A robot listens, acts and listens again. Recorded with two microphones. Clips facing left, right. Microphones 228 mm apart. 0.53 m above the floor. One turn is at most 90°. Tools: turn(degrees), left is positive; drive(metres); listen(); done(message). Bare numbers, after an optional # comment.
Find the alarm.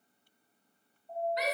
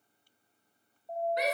# The alarm: about 70° right or 110° right.
turn(-70)
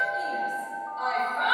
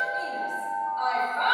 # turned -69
# So it is at 25° right.
turn(-25)
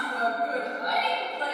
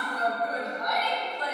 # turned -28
listen()
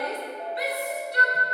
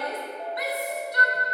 listen()
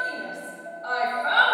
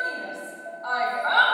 done("Facing where the alarm came from. I can't hear it now.")